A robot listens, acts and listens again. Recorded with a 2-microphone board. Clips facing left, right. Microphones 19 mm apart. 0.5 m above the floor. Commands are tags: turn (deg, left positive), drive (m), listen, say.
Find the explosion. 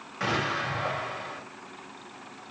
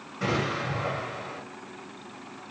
<turn deg="45"/>
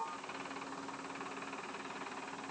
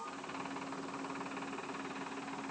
<listen/>
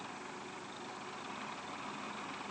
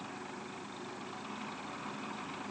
<say>I heard an explosion, but can't make it out now. It was about straight ahead or 90° left.</say>